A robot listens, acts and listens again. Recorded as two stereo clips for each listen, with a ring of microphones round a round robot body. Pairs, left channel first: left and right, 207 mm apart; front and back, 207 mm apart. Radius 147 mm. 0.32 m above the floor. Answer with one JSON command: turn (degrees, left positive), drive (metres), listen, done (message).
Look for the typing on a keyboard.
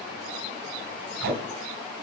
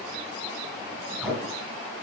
{"listen": true}
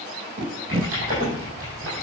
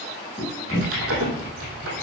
{"turn": -155}
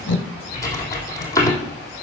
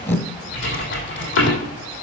{"turn": 15}
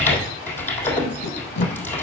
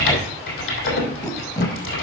{"turn": 10}
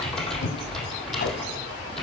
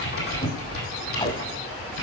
{"done": "Found it: typing on a keyboard, straight ahead."}